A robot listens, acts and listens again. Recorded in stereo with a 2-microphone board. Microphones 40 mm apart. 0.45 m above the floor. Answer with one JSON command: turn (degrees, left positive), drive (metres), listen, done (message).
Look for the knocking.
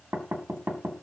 {"turn": -75}
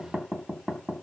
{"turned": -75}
{"turn": -25}
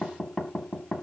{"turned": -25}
{"done": "Facing the knocking, 1 to 2 m away."}